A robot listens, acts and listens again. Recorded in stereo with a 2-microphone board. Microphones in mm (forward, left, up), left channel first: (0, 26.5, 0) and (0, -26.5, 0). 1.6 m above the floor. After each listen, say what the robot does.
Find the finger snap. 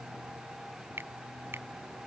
Turn 45° right.
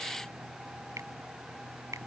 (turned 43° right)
Turn 90° right.
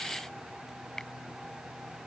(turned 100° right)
Turn 10° left.
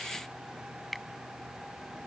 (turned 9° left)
Facing the finger snap.